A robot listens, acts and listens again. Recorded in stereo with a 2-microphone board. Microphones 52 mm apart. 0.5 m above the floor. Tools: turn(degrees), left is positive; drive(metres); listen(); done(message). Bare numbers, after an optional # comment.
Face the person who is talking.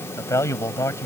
# The man speaking: about 65° left or 115° left.
turn(65)
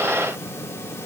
listen()
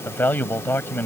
# So it is at 35° left.
turn(35)
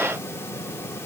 listen()
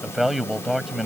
done("Found it: a man speaking, straight ahead.")